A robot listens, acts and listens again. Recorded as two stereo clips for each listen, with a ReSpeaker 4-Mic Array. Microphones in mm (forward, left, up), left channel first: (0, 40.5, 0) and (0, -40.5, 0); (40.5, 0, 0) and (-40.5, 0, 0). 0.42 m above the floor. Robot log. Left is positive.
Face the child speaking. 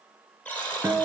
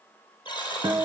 cmd idle
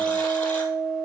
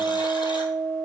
cmd idle
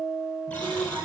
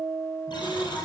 note: The child speaking: 40° right.
cmd yaw -40
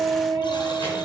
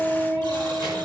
cmd idle
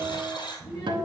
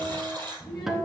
note: The child speaking is now 30° left.
cmd yaw +30
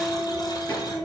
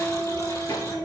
note: The child speaking is now 20° left.
cmd yaw +20
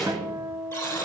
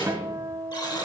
end: Found it: a child speaking, straight ahead.